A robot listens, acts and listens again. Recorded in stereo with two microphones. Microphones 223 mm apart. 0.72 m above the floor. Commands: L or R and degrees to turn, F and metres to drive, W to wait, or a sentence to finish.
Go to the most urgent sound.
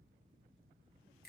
W
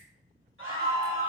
R65
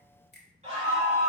R30
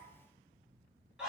F1.0
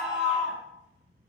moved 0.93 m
F1.0
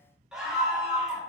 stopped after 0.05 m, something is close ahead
I am next to the scream.